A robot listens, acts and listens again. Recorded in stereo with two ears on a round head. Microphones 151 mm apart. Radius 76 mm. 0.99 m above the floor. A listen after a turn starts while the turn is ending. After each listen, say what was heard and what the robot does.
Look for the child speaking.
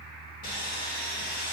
Keep listening.
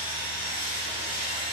Keep listening.
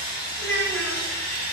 The child speaking: about 65° left or 115° left. Turn 65° left.
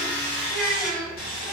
Found it: a child speaking, straight ahead, over 4 m away.